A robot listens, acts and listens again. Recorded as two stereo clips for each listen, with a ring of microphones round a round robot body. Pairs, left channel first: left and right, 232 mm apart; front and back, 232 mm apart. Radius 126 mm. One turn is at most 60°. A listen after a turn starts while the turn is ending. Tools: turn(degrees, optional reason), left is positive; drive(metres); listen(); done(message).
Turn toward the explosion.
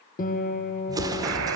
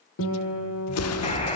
turn(degrees=-15, reason="The explosion: 15° right.")
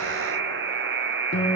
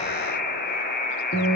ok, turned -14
done("I heard an explosion from this way, but can't make it out now.")